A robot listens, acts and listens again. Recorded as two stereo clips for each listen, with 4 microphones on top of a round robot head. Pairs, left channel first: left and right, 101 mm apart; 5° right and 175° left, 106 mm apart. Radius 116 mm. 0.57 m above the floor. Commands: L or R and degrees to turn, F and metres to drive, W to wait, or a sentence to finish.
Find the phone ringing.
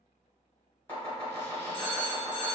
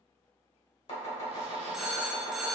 L90
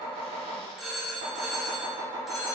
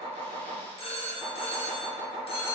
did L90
Found it: a phone ringing, straight ahead.